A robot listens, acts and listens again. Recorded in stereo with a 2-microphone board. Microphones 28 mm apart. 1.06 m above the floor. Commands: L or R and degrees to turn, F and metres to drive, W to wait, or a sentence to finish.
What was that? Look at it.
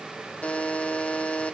L55
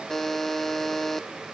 L20
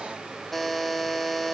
L10
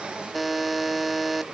Found it: a buzzer, straight ahead.